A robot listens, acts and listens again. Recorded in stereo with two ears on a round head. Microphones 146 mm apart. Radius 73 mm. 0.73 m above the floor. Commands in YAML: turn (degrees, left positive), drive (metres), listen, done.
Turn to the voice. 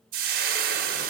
listen: true
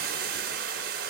listen: true
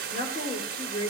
turn: 50
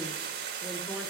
listen: true
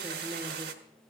listen: true
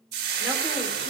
done: "I heard a woman speaking, but can't make it out now. It was about straight ahead or 80° left."